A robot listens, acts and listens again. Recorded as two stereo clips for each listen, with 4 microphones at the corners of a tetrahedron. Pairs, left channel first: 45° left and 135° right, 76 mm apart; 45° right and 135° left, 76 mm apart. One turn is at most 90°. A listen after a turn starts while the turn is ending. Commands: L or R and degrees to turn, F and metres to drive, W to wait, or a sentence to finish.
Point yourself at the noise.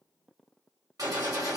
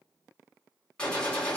R90
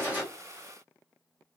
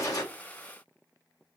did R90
R30
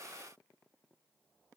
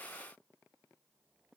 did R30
I heard a gunshot from this way, but can't make it out now.